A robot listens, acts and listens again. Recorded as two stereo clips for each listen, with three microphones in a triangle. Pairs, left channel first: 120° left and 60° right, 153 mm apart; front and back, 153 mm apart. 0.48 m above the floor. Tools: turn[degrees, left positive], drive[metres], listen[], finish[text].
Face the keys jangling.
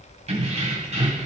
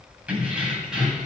Thought: The keys jangling: 95° right.
Action: turn[-95]
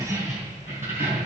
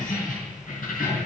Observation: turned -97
Thought: The keys jangling is now 15° left.
Action: turn[15]
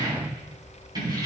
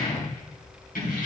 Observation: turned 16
Action: finish[Found it: keys jangling, straight ahead.]